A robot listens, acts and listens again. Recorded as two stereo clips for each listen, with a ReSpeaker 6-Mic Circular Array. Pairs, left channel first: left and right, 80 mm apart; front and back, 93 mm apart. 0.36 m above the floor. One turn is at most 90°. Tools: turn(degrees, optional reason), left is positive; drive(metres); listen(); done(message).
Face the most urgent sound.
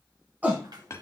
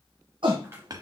turn(degrees=-90, reason="The shout: 160° right.")
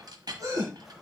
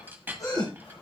turn(degrees=-50, reason="The shout is now 50° right.")
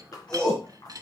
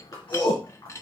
turn(degrees=10, reason="The shout is now 10° left.")
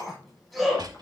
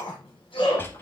done("Found it: a shout, straight ahead.")